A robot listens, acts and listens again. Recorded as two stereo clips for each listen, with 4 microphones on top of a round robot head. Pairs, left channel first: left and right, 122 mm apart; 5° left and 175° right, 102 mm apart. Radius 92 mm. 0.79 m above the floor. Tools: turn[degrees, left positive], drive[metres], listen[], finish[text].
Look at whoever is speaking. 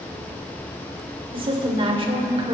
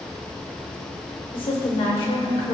Thought: The woman speaking: 45° right.
Action: turn[-45]
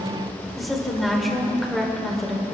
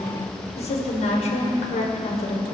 Action: finish[Found it: a woman speaking, straight ahead, 2 to 4 m away.]